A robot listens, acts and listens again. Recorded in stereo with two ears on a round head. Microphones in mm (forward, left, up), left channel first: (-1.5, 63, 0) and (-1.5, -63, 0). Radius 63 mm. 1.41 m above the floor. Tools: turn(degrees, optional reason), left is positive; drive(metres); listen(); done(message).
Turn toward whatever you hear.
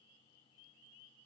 listen()
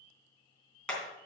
turn(degrees=30)
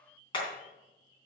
turn(degrees=140, reason="So it is at 140° left.")
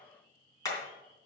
turn(degrees=25, reason="The hammering is now 25° left.")
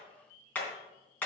turn(degrees=15, reason="The hammering is now 15° left.")
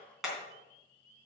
done("Facing the hammering, 2 to 4 m away.")